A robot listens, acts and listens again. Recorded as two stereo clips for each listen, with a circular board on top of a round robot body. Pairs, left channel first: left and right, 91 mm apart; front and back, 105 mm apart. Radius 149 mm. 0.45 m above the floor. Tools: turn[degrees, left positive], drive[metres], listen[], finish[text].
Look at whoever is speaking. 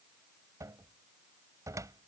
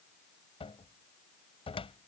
Action: listen[]
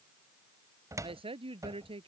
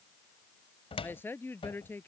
Thought: The woman speaking: 70° right.
Action: turn[-70]
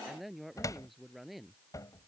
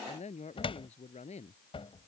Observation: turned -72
Action: finish[Facing the woman speaking.]